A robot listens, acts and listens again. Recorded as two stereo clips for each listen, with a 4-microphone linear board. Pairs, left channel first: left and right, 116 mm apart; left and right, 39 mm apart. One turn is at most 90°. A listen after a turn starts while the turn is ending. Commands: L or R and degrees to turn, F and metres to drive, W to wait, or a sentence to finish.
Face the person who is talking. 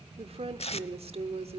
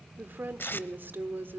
R60
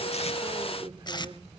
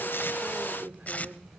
R50
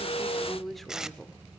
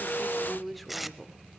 Facing the woman speaking.